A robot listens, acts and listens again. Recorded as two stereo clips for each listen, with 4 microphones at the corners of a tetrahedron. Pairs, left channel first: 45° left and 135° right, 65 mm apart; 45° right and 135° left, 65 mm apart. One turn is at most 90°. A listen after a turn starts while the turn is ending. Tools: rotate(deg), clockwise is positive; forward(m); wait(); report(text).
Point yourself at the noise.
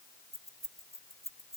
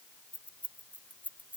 rotate(90)
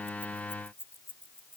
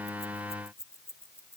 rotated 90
report("Facing the keys jangling.")